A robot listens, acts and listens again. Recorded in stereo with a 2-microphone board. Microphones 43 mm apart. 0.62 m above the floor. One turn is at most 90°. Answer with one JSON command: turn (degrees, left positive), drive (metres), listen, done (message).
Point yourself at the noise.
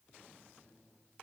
{"listen": true}
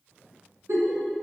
{"turn": -70}
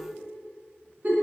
{"turn": -40}
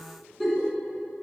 {"done": "Found it: a giggle, straight ahead."}